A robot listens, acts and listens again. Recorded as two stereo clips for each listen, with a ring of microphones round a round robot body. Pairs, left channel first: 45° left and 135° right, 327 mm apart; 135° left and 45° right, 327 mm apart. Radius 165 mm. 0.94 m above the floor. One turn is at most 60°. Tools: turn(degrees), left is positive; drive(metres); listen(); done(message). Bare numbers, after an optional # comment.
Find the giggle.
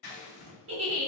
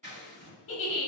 # The giggle: straight behind.
turn(60)
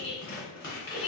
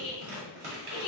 # The giggle is now 115° left.
turn(60)
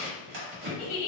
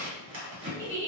# The giggle is now 55° left.
turn(55)
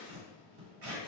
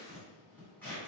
listen()
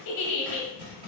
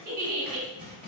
# The giggle is now 15° left.
turn(15)
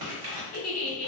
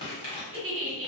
done("Facing the giggle.")